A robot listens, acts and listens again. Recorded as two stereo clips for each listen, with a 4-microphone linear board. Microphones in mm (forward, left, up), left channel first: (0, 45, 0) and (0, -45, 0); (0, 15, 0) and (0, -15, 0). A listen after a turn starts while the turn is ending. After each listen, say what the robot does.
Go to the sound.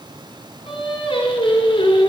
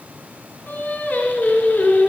Turn 90° left.
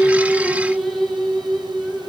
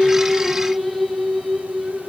Drive 1.0 m forward.
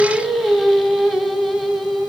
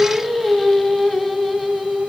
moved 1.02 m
Drive 1.0 m forward.
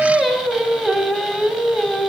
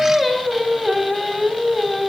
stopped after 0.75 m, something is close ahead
Arrived at the singing, straight ahead.